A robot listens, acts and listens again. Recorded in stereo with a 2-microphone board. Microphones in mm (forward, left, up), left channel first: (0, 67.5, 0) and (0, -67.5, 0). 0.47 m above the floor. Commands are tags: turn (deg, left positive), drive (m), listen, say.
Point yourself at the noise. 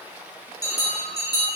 <turn deg="30"/>
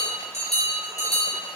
<turn deg="120"/>
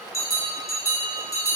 <turn deg="25"/>
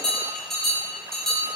<say>Facing the bell, under 1 m away.</say>